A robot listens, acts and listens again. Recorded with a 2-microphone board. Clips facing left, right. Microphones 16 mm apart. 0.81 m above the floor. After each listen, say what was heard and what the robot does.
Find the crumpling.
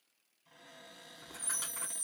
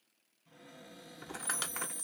The crumpling: about 45° right or 135° right. Turn 45° right.
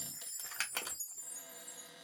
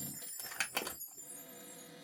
Found it: crumpling, straight ahead.